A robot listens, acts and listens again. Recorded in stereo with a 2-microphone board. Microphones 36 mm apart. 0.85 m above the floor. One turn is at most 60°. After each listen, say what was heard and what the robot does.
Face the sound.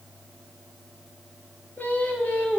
The singing: about 50° left or 130° left. Turn 50° left.
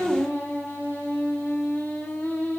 So it is at 80° left. Turn 60° left.
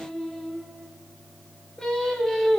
The singing is now 15° left. Turn 15° left.
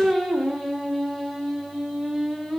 Found it: singing, straight ahead.